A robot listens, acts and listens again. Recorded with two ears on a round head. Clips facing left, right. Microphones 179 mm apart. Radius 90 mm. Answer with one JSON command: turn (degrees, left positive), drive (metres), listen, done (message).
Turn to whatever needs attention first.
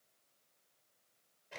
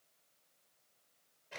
{"listen": true}
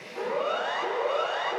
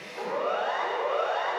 {"turn": 55}
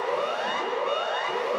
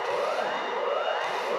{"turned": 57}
{"turn": 65}
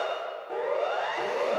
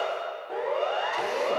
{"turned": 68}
{"done": "Facing the siren."}